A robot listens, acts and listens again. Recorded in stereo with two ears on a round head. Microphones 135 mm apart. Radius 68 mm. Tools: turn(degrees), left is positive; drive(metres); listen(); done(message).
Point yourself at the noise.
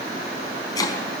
turn(degrees=25)
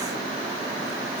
listen()
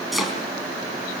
done("Facing the chopping.")